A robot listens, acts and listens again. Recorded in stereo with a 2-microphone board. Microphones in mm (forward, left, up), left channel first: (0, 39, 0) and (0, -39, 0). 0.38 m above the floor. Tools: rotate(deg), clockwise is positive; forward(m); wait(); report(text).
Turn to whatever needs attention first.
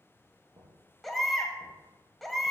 rotate(-30)
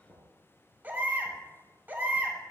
rotate(25)
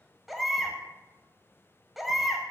report("Facing the baby crying.")